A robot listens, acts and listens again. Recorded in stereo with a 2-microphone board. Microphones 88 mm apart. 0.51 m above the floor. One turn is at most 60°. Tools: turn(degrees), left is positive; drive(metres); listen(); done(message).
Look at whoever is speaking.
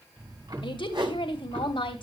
turn(degrees=60)
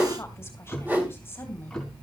turn(degrees=25)
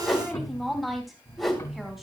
done("Found it: a woman speaking, straight ahead, 2 to 4 m away.")